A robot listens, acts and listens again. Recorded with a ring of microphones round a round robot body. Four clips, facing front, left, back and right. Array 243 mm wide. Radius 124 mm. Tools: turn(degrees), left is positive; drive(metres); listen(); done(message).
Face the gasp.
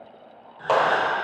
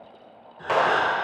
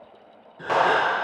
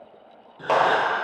turn(degrees=-125)
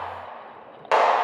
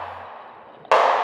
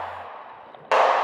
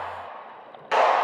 done("I heard a gasp from this way, but can't make it out now.")